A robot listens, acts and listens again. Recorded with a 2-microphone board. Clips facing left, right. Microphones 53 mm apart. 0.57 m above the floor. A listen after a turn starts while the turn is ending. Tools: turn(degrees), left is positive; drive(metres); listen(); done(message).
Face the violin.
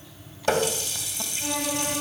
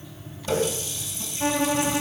turn(degrees=-50)
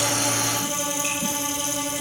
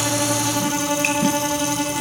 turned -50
turn(degrees=-80)
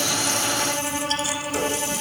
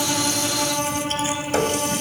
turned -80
done("Facing the violin, over 4 m away.")